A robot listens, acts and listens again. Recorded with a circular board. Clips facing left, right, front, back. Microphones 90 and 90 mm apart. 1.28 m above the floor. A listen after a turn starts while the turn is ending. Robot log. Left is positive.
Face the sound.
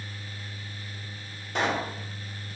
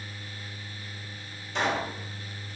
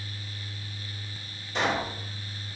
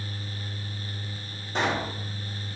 note: The pop: 125° left.
cmd yaw +125
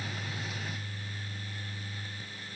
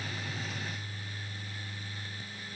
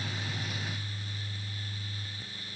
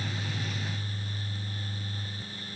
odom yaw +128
end: I heard a pop from this way, but can't make it out now.